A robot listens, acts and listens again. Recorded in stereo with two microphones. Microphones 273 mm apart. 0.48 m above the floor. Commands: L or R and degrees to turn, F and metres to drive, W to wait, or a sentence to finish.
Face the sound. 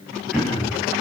L30
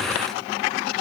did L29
W
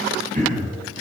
R30
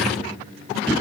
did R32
Facing the throat clearing.